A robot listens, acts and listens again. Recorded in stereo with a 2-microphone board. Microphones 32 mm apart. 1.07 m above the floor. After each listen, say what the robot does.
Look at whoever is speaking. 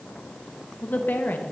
Turn 70° left.
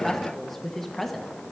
Facing the woman speaking.